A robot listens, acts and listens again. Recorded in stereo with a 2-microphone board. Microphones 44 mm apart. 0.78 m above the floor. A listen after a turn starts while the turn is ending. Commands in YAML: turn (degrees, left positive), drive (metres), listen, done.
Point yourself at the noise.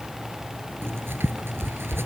turn: -70
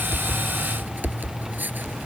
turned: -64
turn: -45
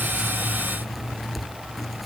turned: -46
done: "Found it: writing, straight ahead."